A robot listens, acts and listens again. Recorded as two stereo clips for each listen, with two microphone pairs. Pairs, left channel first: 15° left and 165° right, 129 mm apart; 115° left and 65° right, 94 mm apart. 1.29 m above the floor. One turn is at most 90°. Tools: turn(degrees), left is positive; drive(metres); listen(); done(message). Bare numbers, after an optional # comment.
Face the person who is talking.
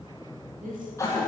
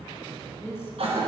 # The woman speaking: 175° right.
turn(-90)
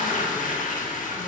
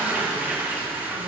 # Nothing new. It was at 85° right.
turn(-85)
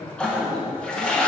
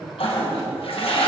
done("Found it: a woman speaking, straight ahead.")